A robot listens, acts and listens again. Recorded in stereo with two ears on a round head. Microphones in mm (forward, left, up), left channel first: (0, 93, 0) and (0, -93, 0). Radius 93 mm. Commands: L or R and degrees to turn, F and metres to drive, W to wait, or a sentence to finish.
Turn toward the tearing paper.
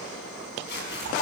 L55
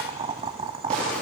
W
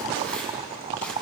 W
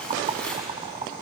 Found it: tearing paper, straight ahead, over 4 m away.